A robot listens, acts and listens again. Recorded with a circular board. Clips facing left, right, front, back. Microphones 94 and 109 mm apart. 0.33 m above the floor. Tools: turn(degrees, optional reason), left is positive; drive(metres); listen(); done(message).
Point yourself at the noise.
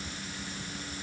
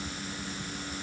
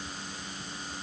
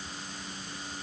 listen()
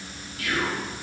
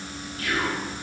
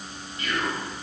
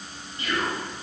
turn(degrees=-135, reason="The whispering: 135° right.")
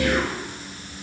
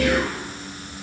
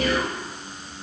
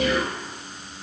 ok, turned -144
turn(degrees=10, reason="The whispering is now 10° left.")
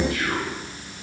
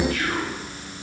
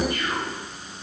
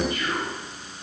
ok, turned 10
done("Facing the whispering, 1 to 2 m away.")